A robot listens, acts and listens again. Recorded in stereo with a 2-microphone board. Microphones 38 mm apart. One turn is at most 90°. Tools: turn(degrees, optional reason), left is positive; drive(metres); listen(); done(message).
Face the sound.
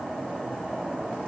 listen()
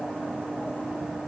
listen()
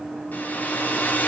turn(degrees=45, reason="The hair dryer: about 45° left or 135° left.")
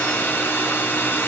turn(degrees=90, reason="So it is at 90° left.")
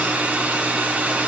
turn(degrees=-35, reason="The hair dryer is now 35° right.")
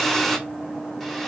done("Found it: a hair dryer, straight ahead.")